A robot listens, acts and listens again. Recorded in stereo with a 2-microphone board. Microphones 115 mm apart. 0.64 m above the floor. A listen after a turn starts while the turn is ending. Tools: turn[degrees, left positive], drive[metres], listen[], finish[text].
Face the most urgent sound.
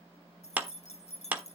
Action: listen[]
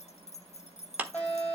Thought: The fire alarm: about 15° left or 165° left.
Action: turn[15]
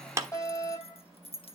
Thought: So it is at 150° left.
Action: turn[150]
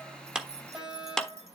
Action: finish[Found it: a fire alarm, straight ahead, over 4 m away.]